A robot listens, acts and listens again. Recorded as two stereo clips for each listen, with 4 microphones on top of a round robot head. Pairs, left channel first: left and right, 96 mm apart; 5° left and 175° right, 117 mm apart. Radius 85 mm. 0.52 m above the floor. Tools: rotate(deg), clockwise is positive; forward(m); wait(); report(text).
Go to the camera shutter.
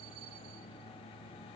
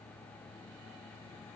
wait()
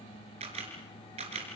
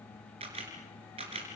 rotate(125)
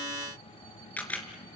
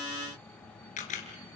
rotate(-15)
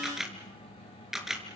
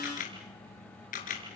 forward(1.0)
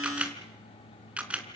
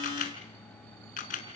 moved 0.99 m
rotate(15)
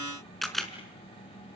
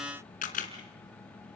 forward(1.0)
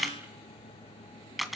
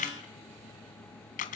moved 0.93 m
forward(1.0)
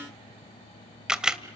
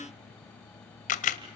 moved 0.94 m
rotate(10)
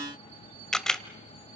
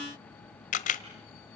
forward(1.0)
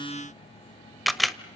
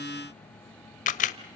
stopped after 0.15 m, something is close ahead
report("Arrived at the camera shutter, straight ahead.")